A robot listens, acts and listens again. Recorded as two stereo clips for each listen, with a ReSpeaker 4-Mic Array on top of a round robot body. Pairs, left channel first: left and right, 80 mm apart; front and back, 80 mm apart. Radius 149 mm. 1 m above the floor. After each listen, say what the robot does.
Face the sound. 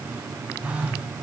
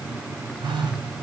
Turn 165° right.
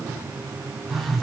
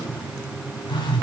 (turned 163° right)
Facing the phone buzzing.